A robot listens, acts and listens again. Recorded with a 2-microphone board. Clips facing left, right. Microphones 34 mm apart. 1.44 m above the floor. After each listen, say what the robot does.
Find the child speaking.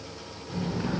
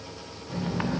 Turn 30° left.
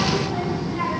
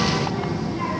Turn 140° left.
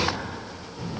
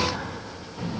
Turn 40° right.
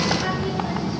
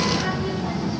Facing the child speaking.